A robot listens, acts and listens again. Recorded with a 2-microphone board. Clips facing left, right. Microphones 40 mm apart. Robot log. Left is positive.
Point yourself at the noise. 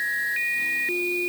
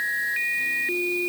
cmd idle
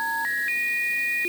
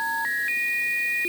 cmd idle
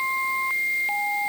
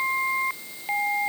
end: I can't make out anything.